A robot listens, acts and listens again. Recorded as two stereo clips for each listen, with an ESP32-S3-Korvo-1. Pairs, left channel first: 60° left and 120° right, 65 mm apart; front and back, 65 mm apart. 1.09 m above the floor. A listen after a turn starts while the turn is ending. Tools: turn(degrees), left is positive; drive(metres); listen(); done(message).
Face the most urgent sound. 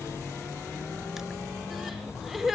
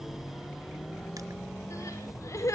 turn(degrees=-35)
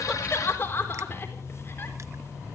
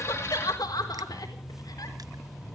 done("Found it: crying, straight ahead.")